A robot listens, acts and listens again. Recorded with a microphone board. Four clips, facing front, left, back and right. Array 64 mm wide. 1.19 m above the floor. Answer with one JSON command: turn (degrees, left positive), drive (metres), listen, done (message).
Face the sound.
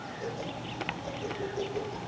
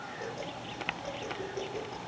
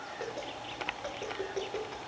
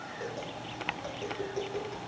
{"turn": -165}
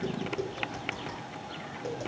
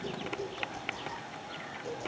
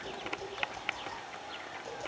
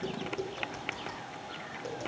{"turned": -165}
{"turn": -40}
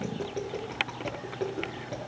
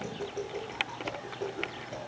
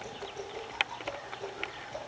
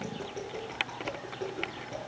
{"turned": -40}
{"done": "Facing the tapping, over 4 m away."}